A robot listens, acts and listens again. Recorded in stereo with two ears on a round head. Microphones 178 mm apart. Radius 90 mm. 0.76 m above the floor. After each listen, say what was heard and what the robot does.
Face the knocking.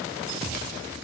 Keep listening.
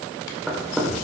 Turn 30° left.
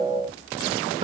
Keep listening.
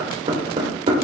So it is at 30° right. Turn 30° right.
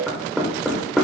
Facing the knocking.